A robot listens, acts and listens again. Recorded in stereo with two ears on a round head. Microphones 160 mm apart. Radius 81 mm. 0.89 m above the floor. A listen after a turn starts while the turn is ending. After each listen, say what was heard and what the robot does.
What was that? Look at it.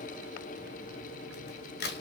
The crack: about 65° left or 115° left. Turn 65° left.
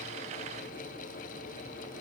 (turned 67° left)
Keep listening.
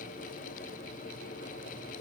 I heard a crack, but can't make it out now. It was about straight ahead or 50° left.